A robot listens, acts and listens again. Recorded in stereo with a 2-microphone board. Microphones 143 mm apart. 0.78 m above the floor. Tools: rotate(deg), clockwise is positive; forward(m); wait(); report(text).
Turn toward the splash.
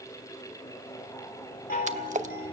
rotate(60)
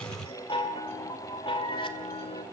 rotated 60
wait()
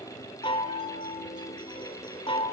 report("I heard a splash, but can't make it out now. It was about straight ahead or 60° right.")